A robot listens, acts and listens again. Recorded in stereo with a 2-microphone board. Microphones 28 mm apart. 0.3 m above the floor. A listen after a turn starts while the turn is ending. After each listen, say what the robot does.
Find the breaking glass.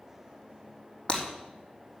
Turn 45° left.
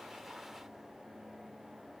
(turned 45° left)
Keep listening.
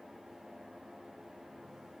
I heard breaking glass, but can't make it out now. It was about straight ahead or 90° left.